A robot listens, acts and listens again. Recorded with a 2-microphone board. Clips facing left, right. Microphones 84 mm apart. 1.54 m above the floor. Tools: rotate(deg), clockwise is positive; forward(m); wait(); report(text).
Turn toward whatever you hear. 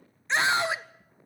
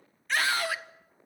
rotate(-25)
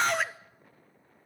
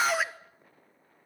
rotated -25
report("Found it: a scream, straight ahead, under 1 m away.")